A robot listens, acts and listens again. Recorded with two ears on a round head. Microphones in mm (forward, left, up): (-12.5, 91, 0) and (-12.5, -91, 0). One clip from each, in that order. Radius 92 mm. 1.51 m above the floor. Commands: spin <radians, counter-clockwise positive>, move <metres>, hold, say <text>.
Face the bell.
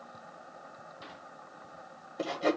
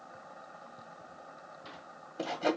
hold
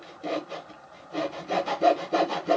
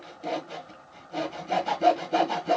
hold
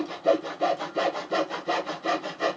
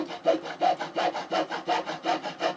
say I can't make out a bell to turn to.